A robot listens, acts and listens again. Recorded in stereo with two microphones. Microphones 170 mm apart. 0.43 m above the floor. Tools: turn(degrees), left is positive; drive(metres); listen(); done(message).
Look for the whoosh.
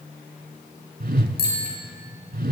turn(degrees=-65)
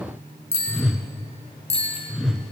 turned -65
done("Facing the whoosh.")